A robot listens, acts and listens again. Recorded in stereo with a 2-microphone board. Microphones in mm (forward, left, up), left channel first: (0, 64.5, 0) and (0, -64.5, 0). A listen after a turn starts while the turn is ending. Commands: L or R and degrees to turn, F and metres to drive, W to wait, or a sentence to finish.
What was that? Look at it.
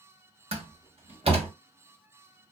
R45
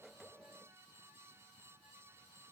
W
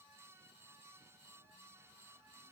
I heard a door slam, but can't make it out now. It was about straight ahead or 90° right.